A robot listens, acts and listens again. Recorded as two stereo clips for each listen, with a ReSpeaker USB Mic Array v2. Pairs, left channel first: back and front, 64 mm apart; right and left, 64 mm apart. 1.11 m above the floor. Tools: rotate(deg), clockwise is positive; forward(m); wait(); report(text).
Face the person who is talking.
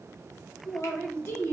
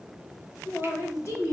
rotate(135)
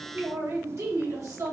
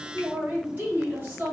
rotate(-30)
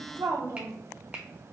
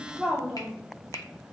rotate(-15)
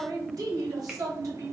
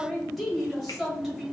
report("Facing the man speaking.")